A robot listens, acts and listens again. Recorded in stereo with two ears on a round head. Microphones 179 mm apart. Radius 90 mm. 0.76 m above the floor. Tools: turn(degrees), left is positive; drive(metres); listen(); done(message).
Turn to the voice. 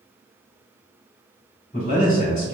turn(degrees=40)
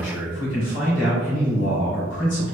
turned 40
turn(degrees=95)
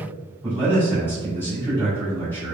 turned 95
turn(degrees=10)
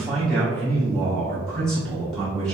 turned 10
done("Found it: a man speaking, straight ahead, 1 to 2 m away.")